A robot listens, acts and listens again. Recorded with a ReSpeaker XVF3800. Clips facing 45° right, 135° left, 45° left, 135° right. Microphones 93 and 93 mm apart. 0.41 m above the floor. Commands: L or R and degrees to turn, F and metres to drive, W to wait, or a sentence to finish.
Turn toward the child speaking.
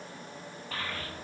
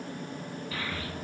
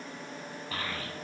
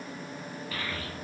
Found it: a child speaking, straight ahead, 1 to 2 m away.